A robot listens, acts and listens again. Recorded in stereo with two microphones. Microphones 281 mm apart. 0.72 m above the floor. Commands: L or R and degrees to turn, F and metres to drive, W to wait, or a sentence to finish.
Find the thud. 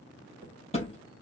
L20
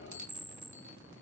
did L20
W
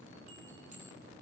I heard a thud, but can't make it out now. It was about straight ahead or 140° left.